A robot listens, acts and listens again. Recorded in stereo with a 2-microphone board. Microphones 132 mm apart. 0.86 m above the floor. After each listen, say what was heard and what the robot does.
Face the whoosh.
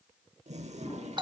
The whoosh: about 20° left or 160° left. Turn 20° left.
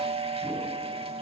Keep listening.
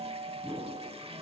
Facing the whoosh.